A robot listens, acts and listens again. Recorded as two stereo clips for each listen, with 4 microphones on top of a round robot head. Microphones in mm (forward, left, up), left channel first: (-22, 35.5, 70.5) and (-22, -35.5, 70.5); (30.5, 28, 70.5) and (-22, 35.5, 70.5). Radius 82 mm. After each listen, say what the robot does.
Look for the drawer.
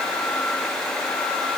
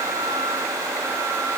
Keep listening.
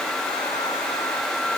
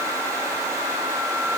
Keep listening.
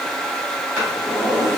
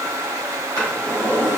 Turn 145° right.
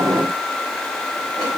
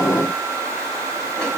Keep listening.
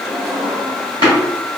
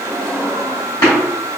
Turn 40° right.
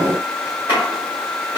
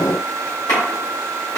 Turn 25° right.
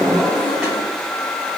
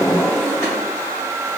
Found it: a drawer, straight ahead, 1 to 2 m away.